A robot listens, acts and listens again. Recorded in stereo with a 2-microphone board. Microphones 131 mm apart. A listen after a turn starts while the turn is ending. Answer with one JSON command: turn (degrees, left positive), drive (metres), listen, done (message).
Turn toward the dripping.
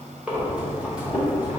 {"listen": true}
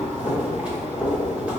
{"listen": true}
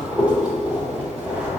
{"done": "I can't make out dripping, only breathing."}